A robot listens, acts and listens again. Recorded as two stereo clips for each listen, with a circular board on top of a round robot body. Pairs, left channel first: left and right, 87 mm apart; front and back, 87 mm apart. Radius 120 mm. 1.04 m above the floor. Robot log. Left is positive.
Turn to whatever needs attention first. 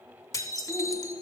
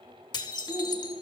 note: The shout: 125° left.
cmd yaw +125
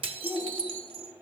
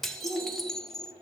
end: Found it: a shout, straight ahead, over 4 m away.